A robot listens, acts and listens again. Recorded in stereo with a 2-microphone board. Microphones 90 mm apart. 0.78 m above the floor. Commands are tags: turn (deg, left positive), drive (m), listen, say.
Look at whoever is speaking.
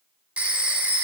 <listen/>
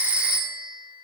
<listen/>
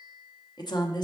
<turn deg="55"/>
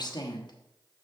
<turn deg="65"/>
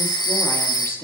<turn deg="30"/>
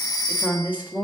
<turn deg="-20"/>
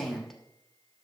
<say>Facing the woman speaking, 1 to 2 m away.</say>